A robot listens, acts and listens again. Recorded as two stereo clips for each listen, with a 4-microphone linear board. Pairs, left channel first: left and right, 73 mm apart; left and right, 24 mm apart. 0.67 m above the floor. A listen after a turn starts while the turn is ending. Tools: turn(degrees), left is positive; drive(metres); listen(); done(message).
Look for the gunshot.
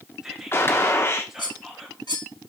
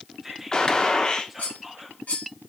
turn(degrees=35)
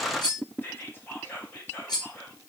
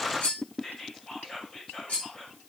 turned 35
listen()
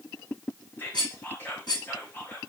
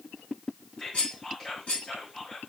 done("I heard a gunshot, but can't make it out now. It was about straight ahead or 110° left.")